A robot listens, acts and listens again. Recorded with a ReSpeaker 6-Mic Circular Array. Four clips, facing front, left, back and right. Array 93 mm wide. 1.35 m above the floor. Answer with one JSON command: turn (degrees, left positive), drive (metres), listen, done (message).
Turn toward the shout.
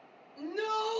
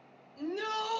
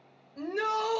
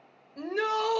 {"turn": -120}
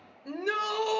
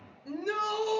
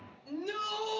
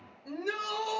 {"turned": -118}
{"done": "Found it: a shout, straight ahead."}